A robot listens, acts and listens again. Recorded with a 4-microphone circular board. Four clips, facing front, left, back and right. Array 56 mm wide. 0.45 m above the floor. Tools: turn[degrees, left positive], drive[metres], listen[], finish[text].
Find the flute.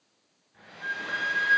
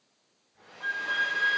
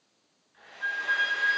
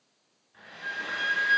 Thought: The flute: 100° left.
Action: turn[100]
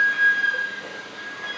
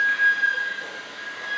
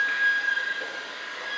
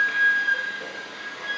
Action: finish[Facing the flute.]